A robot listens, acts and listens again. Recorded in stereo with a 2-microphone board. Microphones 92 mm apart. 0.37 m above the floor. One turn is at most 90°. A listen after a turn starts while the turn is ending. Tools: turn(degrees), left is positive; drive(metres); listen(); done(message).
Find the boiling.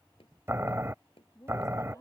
turn(degrees=-25)
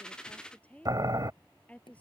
turn(degrees=-90)
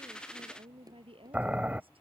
turn(degrees=-15)
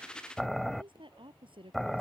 done("Facing the boiling.")